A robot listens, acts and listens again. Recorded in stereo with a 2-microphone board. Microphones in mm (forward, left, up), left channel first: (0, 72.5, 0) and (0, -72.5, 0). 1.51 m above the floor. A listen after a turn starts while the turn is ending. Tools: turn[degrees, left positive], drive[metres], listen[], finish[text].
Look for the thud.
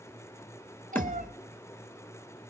Thought: The thud: about 15° left or 165° left.
Action: turn[15]
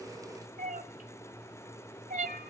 Action: listen[]
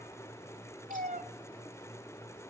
Action: finish[I heard a thud, but can't make it out now. It was about straight ahead or 150° left.]